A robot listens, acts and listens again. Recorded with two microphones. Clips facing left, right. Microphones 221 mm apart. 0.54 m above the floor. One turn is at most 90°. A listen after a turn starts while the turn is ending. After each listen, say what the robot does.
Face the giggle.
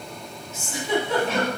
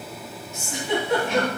Turn 15° right.
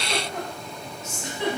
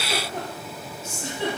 Turn 90° right.
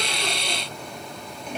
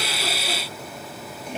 Turn 60° right.
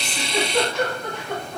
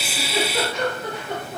Turn 10° right.
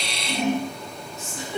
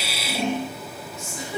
Found it: a giggle, straight ahead.